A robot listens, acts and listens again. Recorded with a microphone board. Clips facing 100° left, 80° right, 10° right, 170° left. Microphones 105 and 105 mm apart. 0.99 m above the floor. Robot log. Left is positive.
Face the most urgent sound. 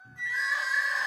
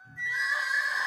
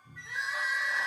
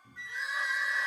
end: Found it: crying, straight ahead.